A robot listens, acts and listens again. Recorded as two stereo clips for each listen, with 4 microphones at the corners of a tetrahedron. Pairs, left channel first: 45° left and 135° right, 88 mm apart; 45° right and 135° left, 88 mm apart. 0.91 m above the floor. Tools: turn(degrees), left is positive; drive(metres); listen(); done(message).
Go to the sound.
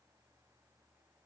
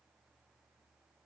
listen()
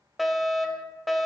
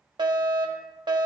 turn(degrees=135)
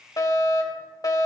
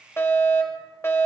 turn(degrees=10)
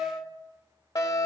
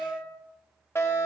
drive(metres=1.0)
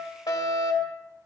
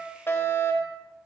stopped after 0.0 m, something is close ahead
turn(degrees=10)
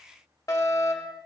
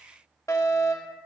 done("Something is in my way. I am facing the fire alarm but have not reached it.")